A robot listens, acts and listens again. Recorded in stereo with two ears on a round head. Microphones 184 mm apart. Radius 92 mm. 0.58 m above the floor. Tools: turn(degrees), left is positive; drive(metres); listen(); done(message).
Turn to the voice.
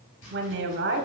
turn(degrees=-55)
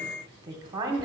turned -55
turn(degrees=-25)
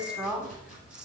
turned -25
done("Found it: a woman speaking, straight ahead, 1 to 2 m away.")